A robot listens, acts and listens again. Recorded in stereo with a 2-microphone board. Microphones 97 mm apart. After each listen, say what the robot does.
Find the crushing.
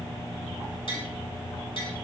Keep listening.
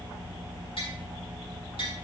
Keep listening.
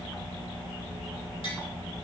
I can't make out crushing.